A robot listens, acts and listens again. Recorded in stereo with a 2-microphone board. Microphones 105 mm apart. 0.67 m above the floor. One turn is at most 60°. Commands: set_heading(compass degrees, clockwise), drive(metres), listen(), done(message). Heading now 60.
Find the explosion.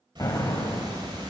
set_heading(25)
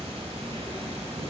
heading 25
listen()
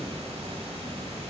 done("I heard an explosion, but can't make it out now. It was about straight ahead or 110° left.")